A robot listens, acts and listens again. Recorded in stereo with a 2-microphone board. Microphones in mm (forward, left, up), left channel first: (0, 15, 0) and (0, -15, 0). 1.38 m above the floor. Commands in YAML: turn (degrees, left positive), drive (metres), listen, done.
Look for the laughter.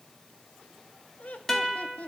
turn: 55
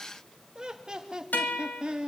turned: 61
turn: -35
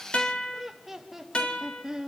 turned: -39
turn: -15
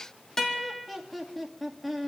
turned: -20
done: "Found it: laughter, straight ahead, 2 to 4 m away."